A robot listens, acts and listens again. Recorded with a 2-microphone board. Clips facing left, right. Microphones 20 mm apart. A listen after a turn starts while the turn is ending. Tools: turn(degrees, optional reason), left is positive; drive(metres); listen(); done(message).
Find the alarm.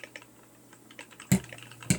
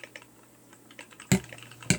listen()
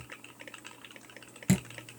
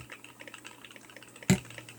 listen()
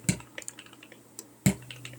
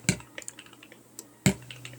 done("I can't make out an alarm to turn to.")